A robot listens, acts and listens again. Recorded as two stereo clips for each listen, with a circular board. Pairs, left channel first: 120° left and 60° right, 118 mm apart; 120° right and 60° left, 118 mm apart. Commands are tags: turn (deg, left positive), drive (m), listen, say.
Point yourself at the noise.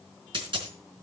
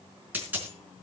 <turn deg="-15"/>
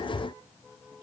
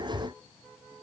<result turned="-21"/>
<say>I heard a dropped coin from this way, but can't make it out now.</say>